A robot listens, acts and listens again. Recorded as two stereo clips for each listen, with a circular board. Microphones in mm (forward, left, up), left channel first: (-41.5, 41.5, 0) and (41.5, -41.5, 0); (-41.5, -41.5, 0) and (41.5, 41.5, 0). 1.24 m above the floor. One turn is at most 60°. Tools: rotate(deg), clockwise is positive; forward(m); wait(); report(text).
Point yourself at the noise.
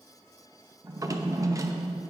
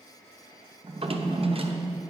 rotate(-15)
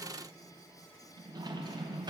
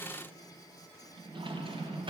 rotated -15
report("Facing the drawer, under 1 m away.")